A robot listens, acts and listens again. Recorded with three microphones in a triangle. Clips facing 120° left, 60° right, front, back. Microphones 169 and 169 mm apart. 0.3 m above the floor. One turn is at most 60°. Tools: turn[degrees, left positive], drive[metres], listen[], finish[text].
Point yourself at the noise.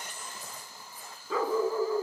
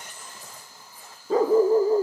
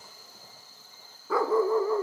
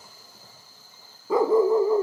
Thought: The dog barking: 110° right.
Action: turn[-60]
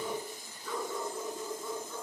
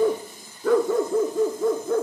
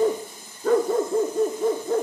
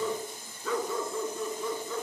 Thought: The dog barking is now 40° right.
Action: turn[-40]
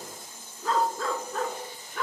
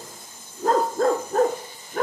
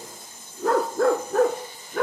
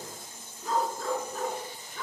Thought: The dog barking is now 15° right.
Action: turn[-15]
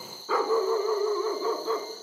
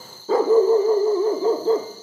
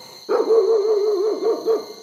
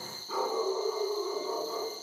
Action: finish[Facing the dog barking, 1 to 2 m away.]